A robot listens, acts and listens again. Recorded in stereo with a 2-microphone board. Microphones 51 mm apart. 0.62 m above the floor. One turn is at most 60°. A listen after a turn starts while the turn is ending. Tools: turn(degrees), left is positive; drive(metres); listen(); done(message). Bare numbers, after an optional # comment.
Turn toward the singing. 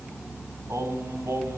# The singing: about 75° right or 105° right.
turn(-60)
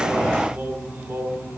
# So it is at 50° right.
turn(-50)
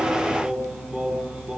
# The singing is now 25° right.
turn(-25)
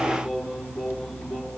# The singing is now 10° right.
turn(-10)
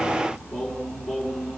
done("Found it: singing, straight ahead, 2 to 4 m away.")